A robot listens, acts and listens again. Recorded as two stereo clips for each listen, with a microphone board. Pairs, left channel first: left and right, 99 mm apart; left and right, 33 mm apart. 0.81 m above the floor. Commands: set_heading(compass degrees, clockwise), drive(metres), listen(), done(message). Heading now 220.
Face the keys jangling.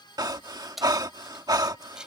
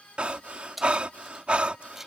set_heading(250)
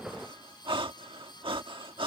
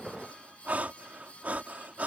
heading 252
listen()
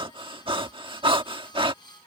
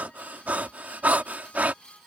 listen()
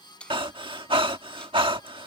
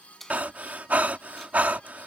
set_heading(242)
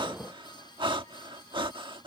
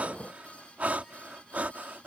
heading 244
listen()
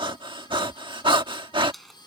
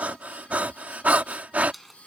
done("Facing the keys jangling.")